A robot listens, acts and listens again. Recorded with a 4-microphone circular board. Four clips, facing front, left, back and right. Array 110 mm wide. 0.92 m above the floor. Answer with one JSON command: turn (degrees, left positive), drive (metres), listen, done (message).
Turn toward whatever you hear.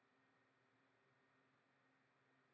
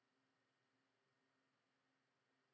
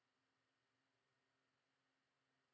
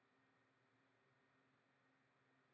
{"listen": true}
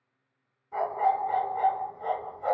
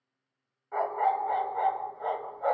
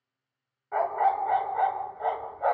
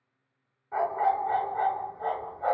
{"turn": 180}
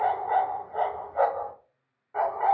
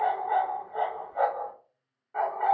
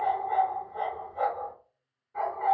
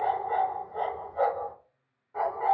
{"turn": 20}
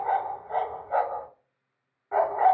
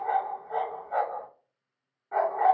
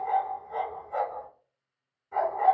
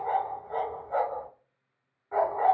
{"done": "Found it: a dog barking, straight ahead, under 1 m away."}